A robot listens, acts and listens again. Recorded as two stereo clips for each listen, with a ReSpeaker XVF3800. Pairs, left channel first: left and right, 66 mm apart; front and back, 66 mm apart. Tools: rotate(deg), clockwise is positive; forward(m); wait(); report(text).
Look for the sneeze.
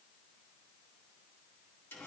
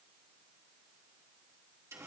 wait()
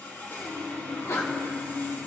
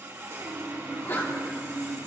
rotate(-50)
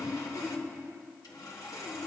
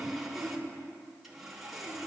report("Facing where the sneeze came from. I can't hear it now.")